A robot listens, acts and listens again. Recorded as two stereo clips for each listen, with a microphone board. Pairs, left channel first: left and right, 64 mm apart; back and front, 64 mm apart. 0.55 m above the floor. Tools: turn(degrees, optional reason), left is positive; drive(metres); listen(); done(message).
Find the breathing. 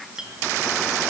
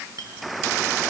listen()
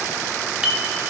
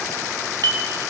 listen()
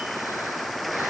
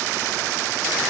done("I can't make out breathing, only a clink.")